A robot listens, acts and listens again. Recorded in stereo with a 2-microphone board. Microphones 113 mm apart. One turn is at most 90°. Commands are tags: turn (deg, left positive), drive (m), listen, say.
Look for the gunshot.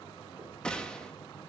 <turn deg="30"/>
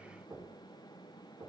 <listen/>
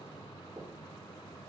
<say>I heard a gunshot, but can't make it out now. It was about 20° right or 140° left.</say>